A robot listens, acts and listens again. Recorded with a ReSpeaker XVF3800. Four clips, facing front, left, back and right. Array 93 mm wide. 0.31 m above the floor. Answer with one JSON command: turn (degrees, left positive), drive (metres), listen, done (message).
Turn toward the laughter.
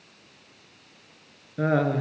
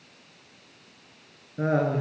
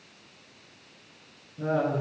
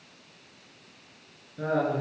{"turn": 20}
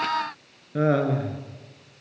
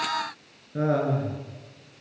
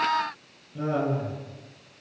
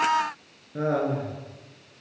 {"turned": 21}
{"done": "Found it: laughter, straight ahead, over 4 m away."}